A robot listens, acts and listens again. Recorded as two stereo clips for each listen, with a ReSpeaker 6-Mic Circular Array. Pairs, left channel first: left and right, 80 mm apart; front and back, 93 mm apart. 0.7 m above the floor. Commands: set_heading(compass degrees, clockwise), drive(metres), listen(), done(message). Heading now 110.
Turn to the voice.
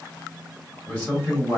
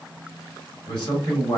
set_heading(80)
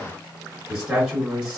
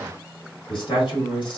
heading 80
done("Facing the man speaking, 1 to 2 m away.")